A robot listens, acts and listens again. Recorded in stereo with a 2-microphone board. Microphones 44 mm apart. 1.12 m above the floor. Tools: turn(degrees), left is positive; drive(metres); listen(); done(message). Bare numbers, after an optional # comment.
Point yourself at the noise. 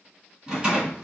# The rattle: about 15° right or 165° right.
turn(-15)
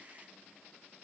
listen()
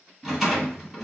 done("Facing the rattle.")